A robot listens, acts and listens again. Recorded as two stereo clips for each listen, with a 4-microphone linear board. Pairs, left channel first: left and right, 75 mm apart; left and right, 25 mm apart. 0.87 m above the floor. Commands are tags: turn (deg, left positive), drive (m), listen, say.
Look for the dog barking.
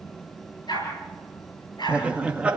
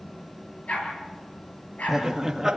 <turn deg="90"/>
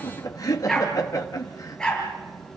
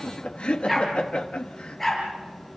<turn deg="10"/>
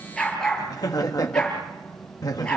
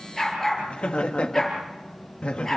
<turn deg="15"/>
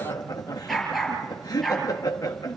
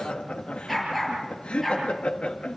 <say>Found it: a dog barking, straight ahead.</say>